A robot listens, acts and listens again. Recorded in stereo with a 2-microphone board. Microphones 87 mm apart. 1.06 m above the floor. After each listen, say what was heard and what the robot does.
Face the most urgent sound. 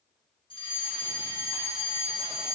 The fire alarm: about 70° left or 110° left. Turn 70° left.
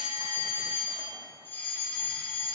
So it is at 25° left. Turn 25° left.
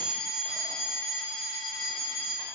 Found it: a fire alarm, straight ahead.